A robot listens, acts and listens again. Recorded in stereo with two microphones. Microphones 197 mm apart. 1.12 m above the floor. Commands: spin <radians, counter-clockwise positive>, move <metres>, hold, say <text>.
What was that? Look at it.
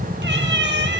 spin -1.13
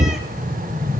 hold
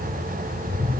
hold
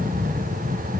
say I heard a cat meowing, but can't make it out now. It was about straight ahead or 50° right.